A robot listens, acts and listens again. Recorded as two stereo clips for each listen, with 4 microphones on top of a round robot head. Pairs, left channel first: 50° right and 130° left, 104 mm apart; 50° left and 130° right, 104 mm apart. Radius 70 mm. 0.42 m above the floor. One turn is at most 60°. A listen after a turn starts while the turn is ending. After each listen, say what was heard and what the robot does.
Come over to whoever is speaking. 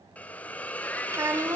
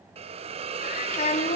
The child speaking: 65° left. Turn 60° left.
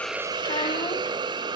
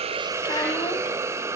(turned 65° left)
Keep listening.
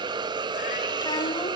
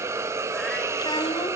Keep listening.
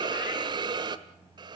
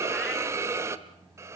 I heard a child speaking from this way, but can't make it out now. I did not reach it.